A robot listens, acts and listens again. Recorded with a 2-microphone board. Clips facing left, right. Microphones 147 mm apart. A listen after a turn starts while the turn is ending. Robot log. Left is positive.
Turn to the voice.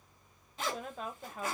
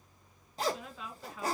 note: The woman speaking: about 45° left or 135° left.
cmd yaw +45
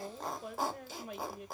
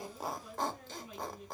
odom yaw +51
note: So it is at 80° left.
cmd yaw +80
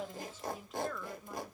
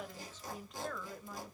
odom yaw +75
end: Facing the woman speaking.